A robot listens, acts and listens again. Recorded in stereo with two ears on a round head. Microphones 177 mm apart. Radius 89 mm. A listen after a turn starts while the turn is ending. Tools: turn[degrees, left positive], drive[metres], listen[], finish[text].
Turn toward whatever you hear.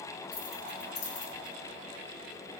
Action: turn[90]
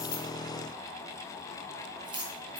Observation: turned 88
Thought: So it is at 25° right.
Action: turn[-25]
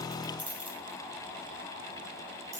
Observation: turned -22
Thought: The keys jangling is now 15° right.
Action: turn[-15]
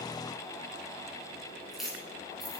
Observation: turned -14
Action: finish[Found it: keys jangling, straight ahead.]